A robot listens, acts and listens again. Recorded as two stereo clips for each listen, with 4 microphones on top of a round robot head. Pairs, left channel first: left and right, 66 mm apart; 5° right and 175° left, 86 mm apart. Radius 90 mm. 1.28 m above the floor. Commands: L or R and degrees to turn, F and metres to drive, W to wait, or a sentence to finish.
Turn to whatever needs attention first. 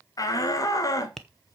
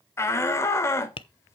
L55
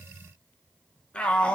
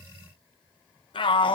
L15
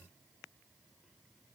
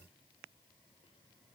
W
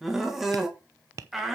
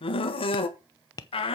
Facing the shout, 1 to 2 m away.